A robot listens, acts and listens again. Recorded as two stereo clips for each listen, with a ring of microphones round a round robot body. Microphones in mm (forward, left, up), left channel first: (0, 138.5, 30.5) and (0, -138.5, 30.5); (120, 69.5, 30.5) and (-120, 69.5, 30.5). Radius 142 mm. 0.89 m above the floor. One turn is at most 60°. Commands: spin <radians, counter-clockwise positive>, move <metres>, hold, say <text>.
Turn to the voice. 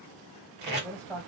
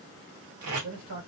spin 1.05
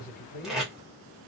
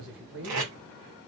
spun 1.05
spin 1.05
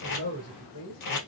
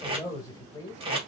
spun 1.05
spin 1.05
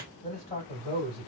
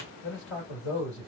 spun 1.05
spin 0.52
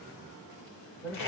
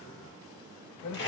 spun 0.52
say Facing the man speaking.